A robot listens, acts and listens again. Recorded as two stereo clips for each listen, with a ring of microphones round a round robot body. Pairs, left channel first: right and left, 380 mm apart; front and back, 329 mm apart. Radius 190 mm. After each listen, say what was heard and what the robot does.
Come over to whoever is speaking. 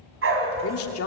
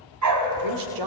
The woman speaking: 145° right. Turn 145° right.
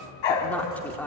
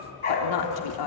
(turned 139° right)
Drive 1.0 m forward.
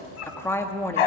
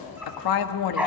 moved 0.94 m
Drive 1.0 m forward.
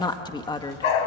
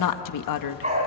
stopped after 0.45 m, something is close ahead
The woman speaking is now 10° right. Turn 10° right.
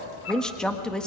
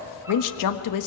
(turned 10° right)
I am next to the woman speaking.